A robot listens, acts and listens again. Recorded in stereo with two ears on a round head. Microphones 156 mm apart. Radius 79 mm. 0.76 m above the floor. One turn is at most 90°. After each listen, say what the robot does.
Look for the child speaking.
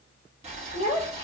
Turn 45° left.
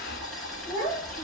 Turn 10° left.
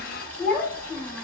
Found it: a child speaking, straight ahead.